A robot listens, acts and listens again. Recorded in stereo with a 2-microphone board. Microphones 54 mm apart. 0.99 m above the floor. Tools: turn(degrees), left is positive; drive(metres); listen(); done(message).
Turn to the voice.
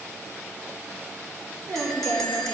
turn(degrees=-65)
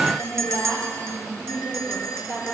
turn(degrees=-55)
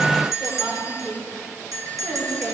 turn(degrees=-10)
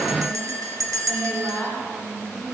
done("Facing the woman speaking, 2 to 4 m away.")